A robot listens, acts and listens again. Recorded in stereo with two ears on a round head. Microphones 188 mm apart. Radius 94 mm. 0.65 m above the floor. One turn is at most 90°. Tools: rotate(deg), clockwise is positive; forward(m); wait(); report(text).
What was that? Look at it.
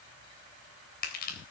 rotate(-50)
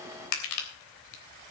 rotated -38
rotate(-90)
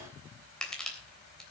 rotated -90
report("Facing the crushing.")